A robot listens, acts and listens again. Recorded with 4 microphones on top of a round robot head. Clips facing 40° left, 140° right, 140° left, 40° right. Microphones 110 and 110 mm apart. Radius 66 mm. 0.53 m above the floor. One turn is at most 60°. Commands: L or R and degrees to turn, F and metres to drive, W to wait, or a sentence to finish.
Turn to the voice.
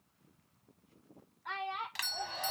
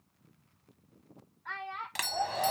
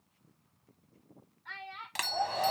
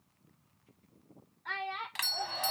R30
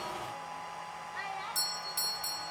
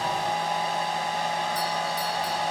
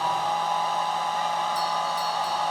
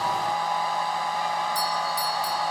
W
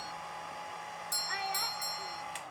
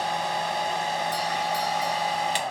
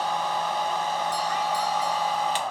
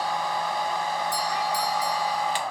W
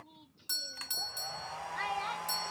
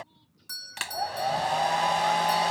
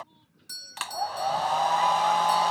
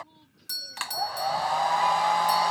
Facing where the child speaking came from. I can't hear it now.